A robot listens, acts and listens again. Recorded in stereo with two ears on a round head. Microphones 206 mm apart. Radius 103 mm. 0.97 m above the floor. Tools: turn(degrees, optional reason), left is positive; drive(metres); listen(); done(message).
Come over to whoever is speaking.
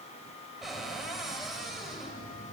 listen()
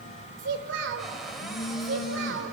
turn(degrees=-55, reason="The child speaking: about 55° right or 125° right.")
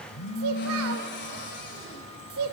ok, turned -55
turn(degrees=-70, reason="So it is at 70° right.")
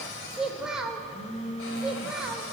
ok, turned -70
drive(metres=1.0)
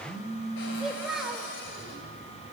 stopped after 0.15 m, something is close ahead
done("Blocked. The child speaking is further on, straight ahead.")